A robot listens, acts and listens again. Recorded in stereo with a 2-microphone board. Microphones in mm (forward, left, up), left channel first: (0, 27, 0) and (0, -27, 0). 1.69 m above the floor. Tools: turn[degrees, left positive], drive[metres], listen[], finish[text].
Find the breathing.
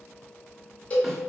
Action: listen[]
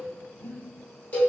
Thought: The breathing: about 60° left or 120° left.
Action: turn[60]
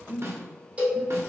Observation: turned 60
Action: finish[Found it: breathing, straight ahead.]